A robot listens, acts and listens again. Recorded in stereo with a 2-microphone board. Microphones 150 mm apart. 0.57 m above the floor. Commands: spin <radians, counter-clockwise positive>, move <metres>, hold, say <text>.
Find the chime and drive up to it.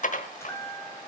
spin 0.35
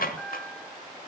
move 1.0
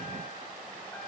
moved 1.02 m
hold
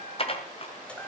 spin 0.17
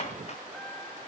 hold
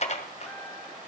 hold
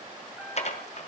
say Facing where the chime came from. I can't hear it now. I did not reach it.